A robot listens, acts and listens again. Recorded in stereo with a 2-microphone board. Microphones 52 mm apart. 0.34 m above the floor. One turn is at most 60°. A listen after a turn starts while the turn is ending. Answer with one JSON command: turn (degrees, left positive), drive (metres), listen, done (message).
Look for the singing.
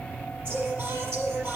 {"turn": -50}
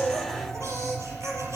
{"turn": -60}
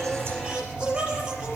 {"turn": -20}
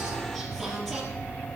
{"done": "Found it: singing, straight ahead."}